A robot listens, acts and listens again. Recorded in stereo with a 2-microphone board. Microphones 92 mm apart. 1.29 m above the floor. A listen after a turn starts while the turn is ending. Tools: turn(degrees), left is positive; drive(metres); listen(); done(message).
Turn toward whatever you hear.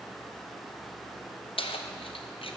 turn(degrees=90)
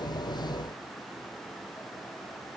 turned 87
listen()
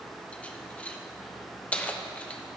turn(degrees=15)
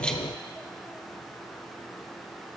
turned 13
listen()
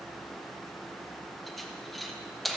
done("Found it: keys jangling, straight ahead.")